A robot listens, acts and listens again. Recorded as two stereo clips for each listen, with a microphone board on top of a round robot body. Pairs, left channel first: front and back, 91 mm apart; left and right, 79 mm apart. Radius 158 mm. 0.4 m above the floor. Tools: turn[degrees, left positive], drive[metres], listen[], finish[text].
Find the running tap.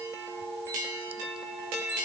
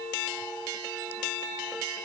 Action: listen[]
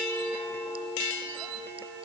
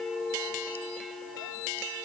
Action: listen[]
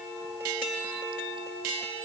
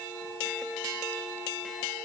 Action: finish[I can't make out a running tap.]